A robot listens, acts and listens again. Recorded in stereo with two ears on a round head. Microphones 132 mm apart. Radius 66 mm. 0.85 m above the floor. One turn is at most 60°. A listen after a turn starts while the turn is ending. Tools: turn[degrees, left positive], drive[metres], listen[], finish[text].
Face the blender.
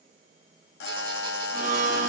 Thought: The blender: about 55° right or 125° right.
Action: turn[-55]
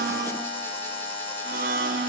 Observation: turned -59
Thought: So it is at 65° right.
Action: turn[-60]
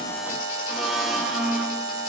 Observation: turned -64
Action: finish[Facing the blender.]